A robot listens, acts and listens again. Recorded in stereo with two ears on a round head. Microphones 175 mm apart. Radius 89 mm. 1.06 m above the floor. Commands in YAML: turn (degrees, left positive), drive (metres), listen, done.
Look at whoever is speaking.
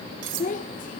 turn: 40
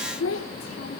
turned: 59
turn: 80
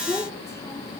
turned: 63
turn: 15
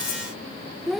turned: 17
done: "Found it: a child speaking, straight ahead."